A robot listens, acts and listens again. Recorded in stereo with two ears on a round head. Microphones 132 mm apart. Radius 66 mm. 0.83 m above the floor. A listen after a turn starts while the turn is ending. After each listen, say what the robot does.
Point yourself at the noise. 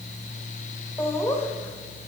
Turn 20° left.
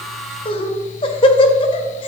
Turn 140° left.
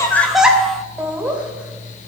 Turn 10° right.
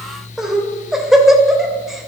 Facing the laughter.